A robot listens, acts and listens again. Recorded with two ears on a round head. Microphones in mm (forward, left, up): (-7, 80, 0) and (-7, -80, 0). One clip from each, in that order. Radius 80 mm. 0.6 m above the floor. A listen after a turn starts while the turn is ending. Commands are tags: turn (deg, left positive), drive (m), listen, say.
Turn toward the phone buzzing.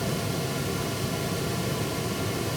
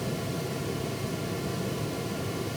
<listen/>
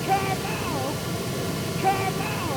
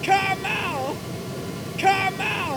<listen/>
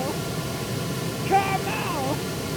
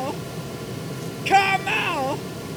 <say>I can't make out a phone buzzing to turn to.</say>